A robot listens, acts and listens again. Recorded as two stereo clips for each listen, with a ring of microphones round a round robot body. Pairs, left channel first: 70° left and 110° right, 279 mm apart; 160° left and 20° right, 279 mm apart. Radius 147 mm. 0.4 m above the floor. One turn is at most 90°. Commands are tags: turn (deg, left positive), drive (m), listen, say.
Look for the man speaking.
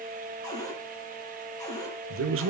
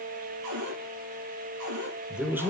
<turn deg="-90"/>
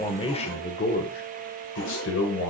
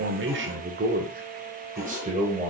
<turn deg="40"/>
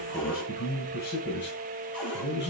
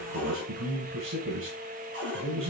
<turn deg="20"/>
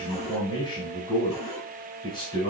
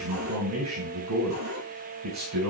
<say>Found it: a man speaking, straight ahead.</say>